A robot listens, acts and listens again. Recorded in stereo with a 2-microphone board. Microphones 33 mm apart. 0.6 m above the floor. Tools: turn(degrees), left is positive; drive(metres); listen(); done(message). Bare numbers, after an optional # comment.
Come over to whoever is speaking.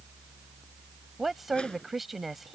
turn(-30)
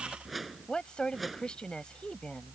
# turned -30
# So it is at 25° left.
turn(25)
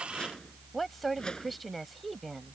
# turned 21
drive(1.0)
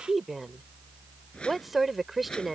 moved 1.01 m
drive(1.0)
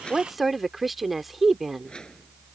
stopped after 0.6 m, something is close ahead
done("Arrived at the woman speaking, straight ahead.")